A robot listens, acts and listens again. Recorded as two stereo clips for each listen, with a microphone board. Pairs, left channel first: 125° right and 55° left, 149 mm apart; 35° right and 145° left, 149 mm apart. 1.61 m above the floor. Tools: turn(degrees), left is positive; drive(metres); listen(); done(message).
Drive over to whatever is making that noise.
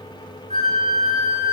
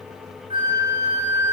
turn(degrees=90)
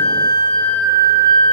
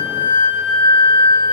turn(degrees=15)
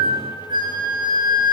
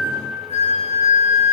drive(metres=1.0)
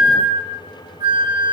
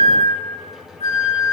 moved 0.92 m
drive(metres=1.0)
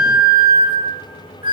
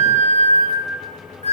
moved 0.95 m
drive(metres=1.0)
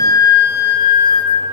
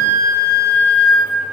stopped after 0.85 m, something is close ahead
done("Arrived at the flute, straight ahead.")